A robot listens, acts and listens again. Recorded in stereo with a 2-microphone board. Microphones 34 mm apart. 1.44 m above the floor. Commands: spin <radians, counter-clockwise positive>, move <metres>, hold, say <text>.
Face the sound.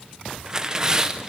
spin -0.35
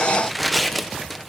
say Found it: tearing paper, straight ahead.